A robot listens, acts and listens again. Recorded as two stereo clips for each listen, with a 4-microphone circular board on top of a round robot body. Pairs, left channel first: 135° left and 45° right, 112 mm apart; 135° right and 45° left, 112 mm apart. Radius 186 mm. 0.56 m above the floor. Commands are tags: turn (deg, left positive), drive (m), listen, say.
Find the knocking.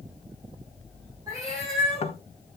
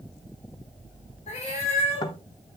<turn deg="170"/>
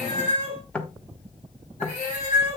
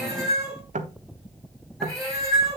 <turn deg="55"/>
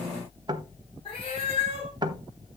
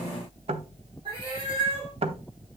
<turn deg="10"/>
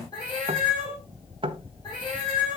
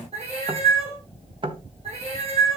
<say>Found it: knocking, straight ahead, 1 to 2 m away.</say>